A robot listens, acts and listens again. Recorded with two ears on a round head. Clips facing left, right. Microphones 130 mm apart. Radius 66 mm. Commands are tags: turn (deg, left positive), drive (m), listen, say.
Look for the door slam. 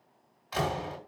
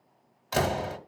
<turn deg="-50"/>
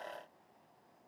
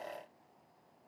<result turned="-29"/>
<listen/>
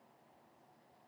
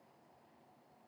<say>I heard a door slam, but can't make it out now. It was about 25° right or 100° right.</say>